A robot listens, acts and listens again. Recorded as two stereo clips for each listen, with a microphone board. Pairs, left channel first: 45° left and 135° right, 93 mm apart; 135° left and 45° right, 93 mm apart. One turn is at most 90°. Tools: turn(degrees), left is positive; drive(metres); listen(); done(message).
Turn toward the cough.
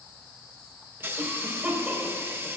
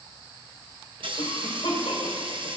turn(degrees=90)
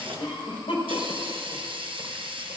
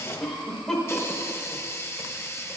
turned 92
turn(degrees=50)
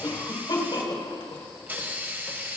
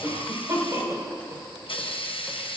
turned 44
turn(degrees=10)
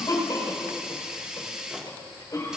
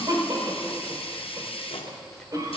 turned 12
done("Facing the cough.")